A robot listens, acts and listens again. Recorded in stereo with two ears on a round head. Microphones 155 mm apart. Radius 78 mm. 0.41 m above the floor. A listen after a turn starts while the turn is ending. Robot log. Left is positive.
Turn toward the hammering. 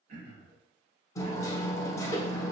note: The hammering: about 20° left or 160° left.
cmd yaw +20
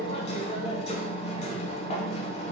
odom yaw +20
note: So it is at 140° left.
cmd yaw +140
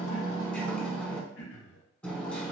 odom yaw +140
end: Found it: hammering, straight ahead, under 1 m away.